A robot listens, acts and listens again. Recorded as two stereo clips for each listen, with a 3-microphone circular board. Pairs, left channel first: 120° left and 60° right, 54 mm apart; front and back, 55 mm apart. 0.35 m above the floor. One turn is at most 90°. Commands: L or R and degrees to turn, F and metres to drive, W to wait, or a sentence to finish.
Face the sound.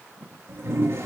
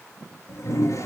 R20
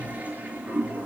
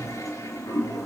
Facing the toilet flushing, over 4 m away.